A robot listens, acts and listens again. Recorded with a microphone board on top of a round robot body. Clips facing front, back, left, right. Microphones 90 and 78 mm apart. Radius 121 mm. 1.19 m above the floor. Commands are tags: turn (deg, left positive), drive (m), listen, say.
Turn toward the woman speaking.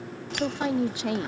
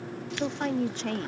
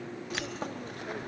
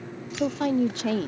<turn deg="-80"/>
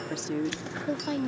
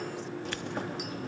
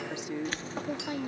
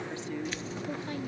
<turn deg="20"/>
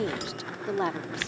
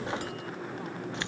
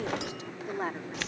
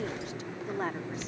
<say>Found it: a woman speaking, straight ahead.</say>